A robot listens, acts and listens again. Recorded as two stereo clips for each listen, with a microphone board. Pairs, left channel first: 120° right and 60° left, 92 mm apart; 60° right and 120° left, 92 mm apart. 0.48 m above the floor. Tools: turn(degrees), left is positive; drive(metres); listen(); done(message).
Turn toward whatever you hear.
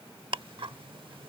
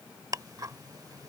turn(degrees=75)
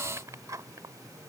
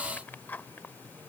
turn(degrees=10)
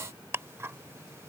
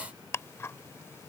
done("Found it: ticking, straight ahead.")